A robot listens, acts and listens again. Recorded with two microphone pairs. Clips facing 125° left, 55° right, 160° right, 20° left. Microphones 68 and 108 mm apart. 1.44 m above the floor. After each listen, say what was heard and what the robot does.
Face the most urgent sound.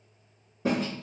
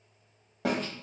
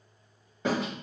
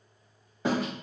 Keep listening.
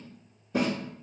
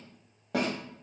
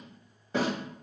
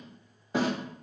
Keep listening.
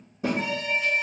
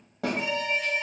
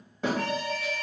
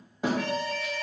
The alarm: 170° left. Turn 170° left.
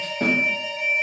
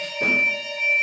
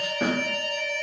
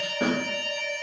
The alarm is now 35° right. Turn 35° right.
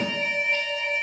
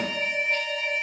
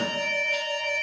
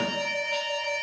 The alarm is now 15° left. Turn 15° left.
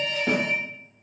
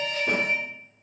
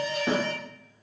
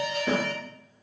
Facing the alarm, 1 to 2 m away.